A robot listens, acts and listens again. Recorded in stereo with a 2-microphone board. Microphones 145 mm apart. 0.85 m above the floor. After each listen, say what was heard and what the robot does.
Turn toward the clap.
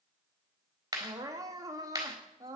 The clap: about 20° right or 160° right. Turn 20° right.
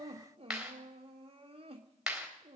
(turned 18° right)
Found it: a clap, straight ahead, 2 to 4 m away.